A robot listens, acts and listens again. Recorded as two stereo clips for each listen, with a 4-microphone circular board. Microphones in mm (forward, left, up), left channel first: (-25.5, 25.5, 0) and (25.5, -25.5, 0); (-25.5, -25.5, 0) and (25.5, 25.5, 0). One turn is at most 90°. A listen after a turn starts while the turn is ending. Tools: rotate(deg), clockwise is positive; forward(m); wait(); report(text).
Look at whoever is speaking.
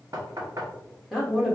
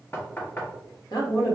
rotate(90)
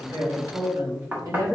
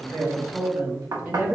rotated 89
rotate(15)
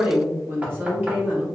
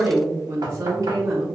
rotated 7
rotate(-25)
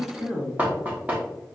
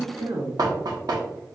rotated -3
rotate(-40)
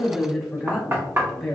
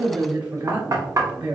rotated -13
rotate(-45)
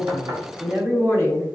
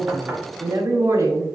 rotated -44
report("Found it: a woman speaking, straight ahead.")